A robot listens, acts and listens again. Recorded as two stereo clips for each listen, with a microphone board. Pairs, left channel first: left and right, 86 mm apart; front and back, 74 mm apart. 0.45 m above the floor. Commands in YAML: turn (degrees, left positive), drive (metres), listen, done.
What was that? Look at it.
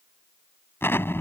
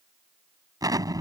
turn: 150
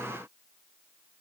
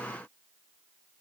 done: "I heard an explosion from this way, but can't make it out now."